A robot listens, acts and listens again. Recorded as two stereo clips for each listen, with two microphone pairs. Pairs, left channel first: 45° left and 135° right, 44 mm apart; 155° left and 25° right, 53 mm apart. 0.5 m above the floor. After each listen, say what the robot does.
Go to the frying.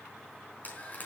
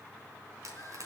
Drive 1.0 m forward.
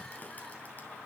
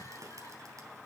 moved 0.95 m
Keep listening.
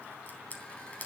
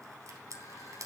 Drive 1.0 m forward.
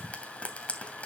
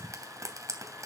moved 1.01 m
Turn 15° right.
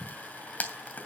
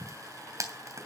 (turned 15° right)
Drive 1.0 m forward.
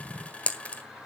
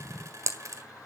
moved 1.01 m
Turn 15° right.
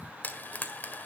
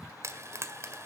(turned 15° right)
Drive 1.0 m forward.
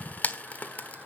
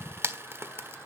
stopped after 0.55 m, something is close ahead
I am next to the frying.